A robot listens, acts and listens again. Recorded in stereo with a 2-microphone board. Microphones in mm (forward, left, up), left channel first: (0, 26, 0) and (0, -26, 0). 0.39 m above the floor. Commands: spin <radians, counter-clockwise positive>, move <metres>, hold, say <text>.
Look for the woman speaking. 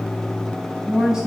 spin -0.52
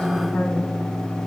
spin 0.26
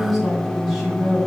say Facing the woman speaking, 2 to 4 m away.